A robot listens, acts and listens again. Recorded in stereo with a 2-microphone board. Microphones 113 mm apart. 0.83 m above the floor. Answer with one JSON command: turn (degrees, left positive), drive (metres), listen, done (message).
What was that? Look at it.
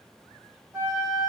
{"turn": -20}
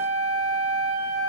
{"turn": -140}
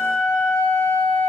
{"turn": -20}
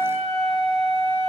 {"done": "Found it: a flute, straight ahead."}